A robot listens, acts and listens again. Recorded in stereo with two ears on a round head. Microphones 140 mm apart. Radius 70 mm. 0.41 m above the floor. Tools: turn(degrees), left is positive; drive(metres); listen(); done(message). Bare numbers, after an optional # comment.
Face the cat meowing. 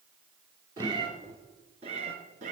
# The cat meowing: about 45° right or 135° right.
turn(-45)
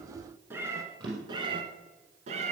# So it is at 45° right.
turn(-45)
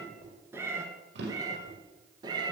# The cat meowing is now 25° right.
turn(-25)
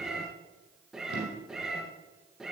done("Facing the cat meowing.")